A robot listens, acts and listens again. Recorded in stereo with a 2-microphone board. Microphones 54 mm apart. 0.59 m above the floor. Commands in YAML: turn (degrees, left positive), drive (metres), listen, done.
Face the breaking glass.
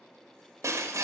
turn: -90
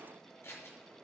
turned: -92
done: "I heard breaking glass from this way, but can't make it out now."